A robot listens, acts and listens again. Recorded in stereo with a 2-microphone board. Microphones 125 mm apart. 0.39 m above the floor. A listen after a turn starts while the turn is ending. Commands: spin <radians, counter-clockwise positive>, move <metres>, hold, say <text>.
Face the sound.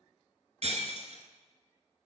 spin -1.13
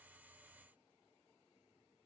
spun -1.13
hold
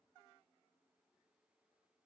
say I heard breaking glass, but can't make it out now. It was about straight ahead or 50° right.